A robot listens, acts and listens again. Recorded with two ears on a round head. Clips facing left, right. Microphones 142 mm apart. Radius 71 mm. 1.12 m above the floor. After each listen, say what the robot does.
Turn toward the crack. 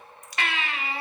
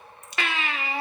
Turn 20° right.
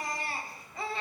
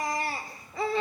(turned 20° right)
Keep listening.
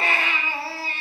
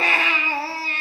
I heard a crack, but can't make it out now. It was about straight ahead or 140° right.